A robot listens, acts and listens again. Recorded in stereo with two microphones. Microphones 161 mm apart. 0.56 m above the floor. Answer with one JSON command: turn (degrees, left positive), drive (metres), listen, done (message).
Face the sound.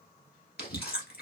{"turn": 90}
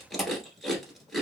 {"done": "Found it: chewing, straight ahead, 1 to 2 m away."}